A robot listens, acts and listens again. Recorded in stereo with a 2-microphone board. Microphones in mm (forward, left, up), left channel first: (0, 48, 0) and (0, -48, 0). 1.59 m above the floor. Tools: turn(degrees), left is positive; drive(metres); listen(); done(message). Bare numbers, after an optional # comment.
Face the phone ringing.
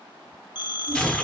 # The phone ringing: about 50° left or 130° left.
turn(50)
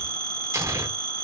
# So it is at 60° left.
turn(60)
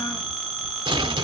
done("Found it: a phone ringing, straight ahead.")